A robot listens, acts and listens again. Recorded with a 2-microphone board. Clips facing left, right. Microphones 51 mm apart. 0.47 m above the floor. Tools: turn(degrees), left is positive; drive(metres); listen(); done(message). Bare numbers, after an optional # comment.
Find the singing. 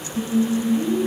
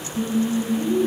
turn(30)
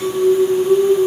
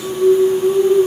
# So it is at 140° left.
turn(140)
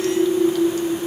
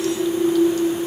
# The singing is now 30° left.
turn(30)
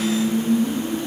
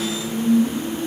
done("Facing the singing.")